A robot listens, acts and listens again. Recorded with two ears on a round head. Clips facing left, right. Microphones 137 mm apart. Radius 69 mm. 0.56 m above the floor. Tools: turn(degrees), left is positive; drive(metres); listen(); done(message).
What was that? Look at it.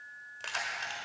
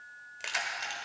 turn(degrees=-30)
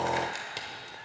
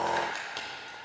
turn(degrees=20)
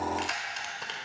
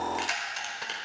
done("Found it: keys jangling, straight ahead.")